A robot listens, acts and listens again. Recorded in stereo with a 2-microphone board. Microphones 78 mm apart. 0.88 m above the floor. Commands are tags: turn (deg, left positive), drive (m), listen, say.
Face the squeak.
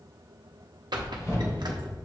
<turn deg="-65"/>
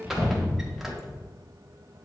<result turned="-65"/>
<listen/>
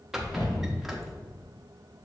<say>Facing the squeak, under 1 m away.</say>